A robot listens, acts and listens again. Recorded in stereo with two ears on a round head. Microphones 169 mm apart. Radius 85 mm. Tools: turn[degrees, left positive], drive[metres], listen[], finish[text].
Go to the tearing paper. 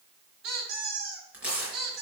Action: turn[-30]
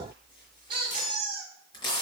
Thought: So it is at 25° left.
Action: turn[25]
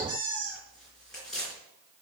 Action: drive[1.0]
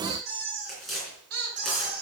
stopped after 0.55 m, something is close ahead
Action: finish[Something is in my way. I am facing the tearing paper but have not reached it.]